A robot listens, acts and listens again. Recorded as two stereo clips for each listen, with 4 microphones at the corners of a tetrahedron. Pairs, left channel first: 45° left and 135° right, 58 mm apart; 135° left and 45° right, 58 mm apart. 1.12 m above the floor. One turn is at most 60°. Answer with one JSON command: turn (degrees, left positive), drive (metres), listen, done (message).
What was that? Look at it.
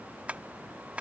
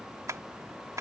{"turn": -60}
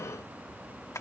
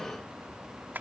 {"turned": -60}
{"turn": 15}
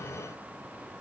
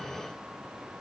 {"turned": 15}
{"listen": true}
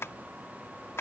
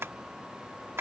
{"done": "Found it: tapping, straight ahead."}